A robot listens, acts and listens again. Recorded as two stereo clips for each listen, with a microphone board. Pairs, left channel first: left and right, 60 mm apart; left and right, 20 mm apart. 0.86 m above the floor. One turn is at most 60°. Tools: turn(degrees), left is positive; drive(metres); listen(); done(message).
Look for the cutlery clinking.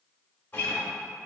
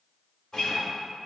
listen()
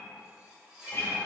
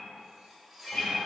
turn(degrees=-30)
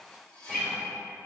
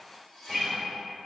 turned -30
turn(degrees=20)
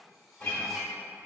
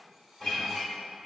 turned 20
listen()
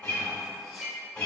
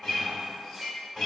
done("Facing the cutlery clinking.")